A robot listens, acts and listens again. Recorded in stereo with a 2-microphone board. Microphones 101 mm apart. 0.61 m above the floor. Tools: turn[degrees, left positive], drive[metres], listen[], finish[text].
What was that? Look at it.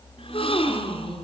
Thought: The gasp: about 65° left or 115° left.
Action: turn[65]
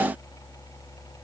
Action: listen[]
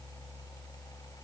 Action: finish[I heard a gasp, but can't make it out now. It was about straight ahead or 50° left.]